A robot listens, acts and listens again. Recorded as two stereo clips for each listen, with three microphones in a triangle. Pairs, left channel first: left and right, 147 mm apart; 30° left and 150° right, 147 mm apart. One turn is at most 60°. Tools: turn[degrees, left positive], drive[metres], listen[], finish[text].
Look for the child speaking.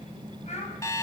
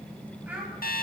Thought: The child speaking: 130° left.
Action: turn[60]
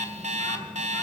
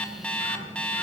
Thought: Nothing new. It was at 70° left.
Action: turn[60]
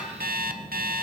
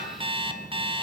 Thought: Nothing new. It was at 10° left.
Action: turn[10]
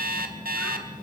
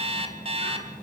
Action: finish[I heard a child speaking from this way, but can't make it out now.]